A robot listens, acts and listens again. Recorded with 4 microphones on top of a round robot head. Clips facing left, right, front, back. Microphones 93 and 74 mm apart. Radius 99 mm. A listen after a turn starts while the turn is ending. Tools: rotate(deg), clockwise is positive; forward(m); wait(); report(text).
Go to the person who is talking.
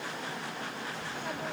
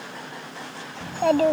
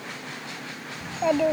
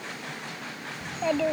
rotate(80)
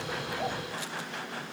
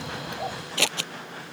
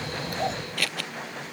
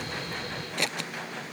wait()
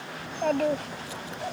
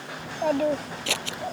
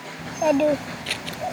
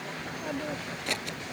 forward(1.0)
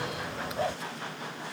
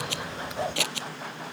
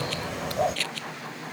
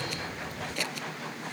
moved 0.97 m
forward(1.0)
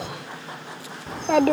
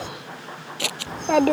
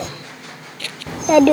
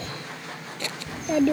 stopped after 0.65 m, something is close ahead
report("I am next to the child speaking.")